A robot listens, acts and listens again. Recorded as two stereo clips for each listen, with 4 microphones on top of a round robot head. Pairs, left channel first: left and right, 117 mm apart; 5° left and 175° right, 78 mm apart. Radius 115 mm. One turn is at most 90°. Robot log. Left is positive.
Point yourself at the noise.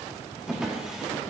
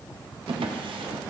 note: The drawer: 175° right.
cmd yaw -90
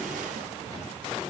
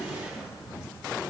note: Nothing new. It was at 85° right.
cmd yaw -85
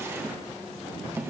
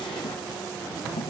note: The drawer is now 20° right.
cmd yaw -20
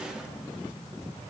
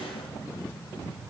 cmd idle
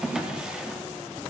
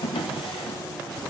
end: Facing the drawer, under 1 m away.